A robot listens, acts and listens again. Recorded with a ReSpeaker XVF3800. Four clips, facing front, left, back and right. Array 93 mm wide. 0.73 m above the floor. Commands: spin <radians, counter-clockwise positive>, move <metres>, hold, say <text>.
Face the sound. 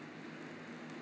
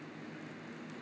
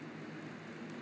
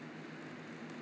hold
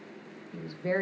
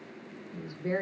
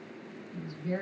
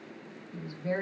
say Facing the woman speaking, 1 to 2 m away.